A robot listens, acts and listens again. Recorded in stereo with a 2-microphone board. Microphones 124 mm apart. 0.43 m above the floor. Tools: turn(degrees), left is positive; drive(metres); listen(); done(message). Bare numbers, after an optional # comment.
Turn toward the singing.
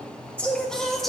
turn(30)
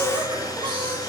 # So it is at 45° right.
turn(-45)
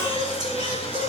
# The singing is now 45° right.
turn(-45)
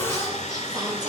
# The singing is now 35° right.
turn(-35)
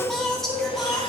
done("Found it: singing, straight ahead.")